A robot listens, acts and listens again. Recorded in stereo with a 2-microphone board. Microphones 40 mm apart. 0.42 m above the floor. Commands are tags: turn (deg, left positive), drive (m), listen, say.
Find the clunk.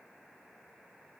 <listen/>
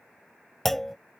<turn deg="30"/>
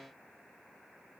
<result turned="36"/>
<listen/>
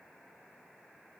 <say>I heard a clunk, but can't make it out now. It was about 30° right or 135° left.</say>